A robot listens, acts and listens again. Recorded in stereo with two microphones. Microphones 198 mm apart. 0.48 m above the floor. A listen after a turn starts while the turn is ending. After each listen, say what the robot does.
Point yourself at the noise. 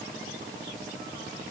Keep listening.
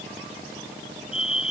Turn 30° left.
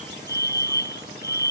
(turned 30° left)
Turn 120° left.
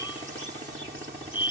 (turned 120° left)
Turn 25° left.
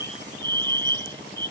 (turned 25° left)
Turn 25° right.
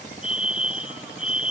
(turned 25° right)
Facing the fire alarm.